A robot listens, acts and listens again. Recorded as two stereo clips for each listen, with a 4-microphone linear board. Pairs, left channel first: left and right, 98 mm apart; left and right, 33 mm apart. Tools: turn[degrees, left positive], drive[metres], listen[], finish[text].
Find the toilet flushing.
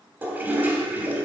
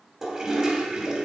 Thought: The toilet flushing: about 20° right or 160° right.
Action: turn[-20]
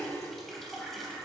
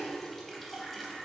Action: listen[]
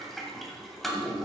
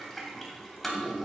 Action: finish[Facing the toilet flushing, 2 to 4 m away.]